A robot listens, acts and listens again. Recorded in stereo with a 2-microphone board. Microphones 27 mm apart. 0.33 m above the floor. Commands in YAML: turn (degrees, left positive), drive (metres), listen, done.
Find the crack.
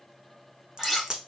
turn: -25
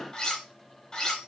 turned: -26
listen: true
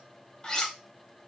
done: "I heard a crack, but can't make it out now. It was about straight ahead or 125° right."